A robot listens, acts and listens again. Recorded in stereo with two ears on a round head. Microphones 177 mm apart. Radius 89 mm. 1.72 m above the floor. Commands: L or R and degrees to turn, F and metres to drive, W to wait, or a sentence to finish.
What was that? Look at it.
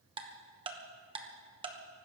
R25
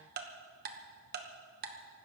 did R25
R125
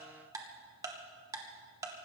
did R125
R15
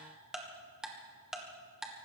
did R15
Facing the ticking, 1 to 2 m away.